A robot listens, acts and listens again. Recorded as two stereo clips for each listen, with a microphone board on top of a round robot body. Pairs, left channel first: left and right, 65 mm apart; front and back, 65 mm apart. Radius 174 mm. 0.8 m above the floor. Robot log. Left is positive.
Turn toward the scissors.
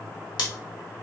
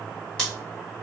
cmd idle
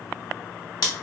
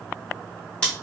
note: The scissors: 75° left.
cmd yaw +75
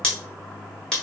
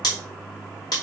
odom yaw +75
note: The scissors is now 10° left.
cmd yaw +10
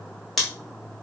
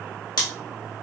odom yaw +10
end: Found it: scissors, straight ahead, 1 to 2 m away.